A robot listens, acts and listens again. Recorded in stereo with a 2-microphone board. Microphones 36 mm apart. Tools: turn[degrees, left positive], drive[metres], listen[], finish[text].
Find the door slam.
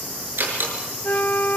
Thought: The door slam: about 65° right or 115° right.
Action: turn[-65]
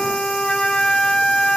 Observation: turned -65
Action: listen[]
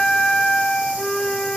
Action: finish[I heard a door slam, but can't make it out now. It was about straight ahead or 50° right.]